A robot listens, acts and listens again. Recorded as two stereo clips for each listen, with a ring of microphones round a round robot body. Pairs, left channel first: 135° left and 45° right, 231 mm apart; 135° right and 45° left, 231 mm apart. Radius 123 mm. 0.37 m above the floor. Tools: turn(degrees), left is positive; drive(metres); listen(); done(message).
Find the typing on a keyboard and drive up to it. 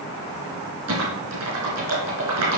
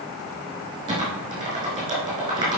turn(degrees=-25)
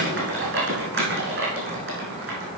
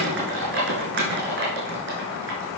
drive(metres=1.0)
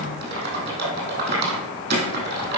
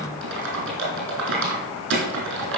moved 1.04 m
drive(metres=1.0)
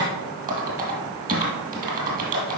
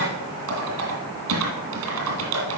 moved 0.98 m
turn(degrees=10)
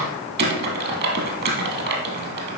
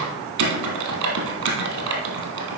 drive(metres=1.0)
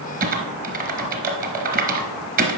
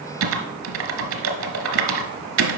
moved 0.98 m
turn(degrees=10)
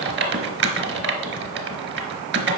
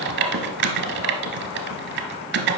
drive(metres=1.0)
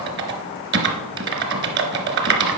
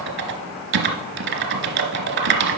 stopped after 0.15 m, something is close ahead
done("Arrived at the typing on a keyboard, straight ahead.")